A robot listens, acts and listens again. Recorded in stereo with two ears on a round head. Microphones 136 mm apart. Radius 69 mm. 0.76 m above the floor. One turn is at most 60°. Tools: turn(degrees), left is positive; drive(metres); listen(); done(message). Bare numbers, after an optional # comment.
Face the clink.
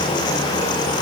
listen()
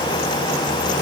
listen()
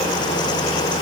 done("I can't make out a clink to turn to.")